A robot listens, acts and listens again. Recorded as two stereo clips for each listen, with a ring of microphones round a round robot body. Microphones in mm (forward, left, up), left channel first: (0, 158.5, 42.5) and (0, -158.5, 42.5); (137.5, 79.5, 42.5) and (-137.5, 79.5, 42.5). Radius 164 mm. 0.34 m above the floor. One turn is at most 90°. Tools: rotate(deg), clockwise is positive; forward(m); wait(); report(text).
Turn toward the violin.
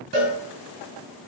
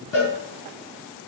wait()
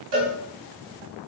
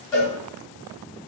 wait()
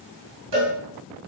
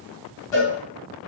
report("I can't make out a violin, only a cowbell.")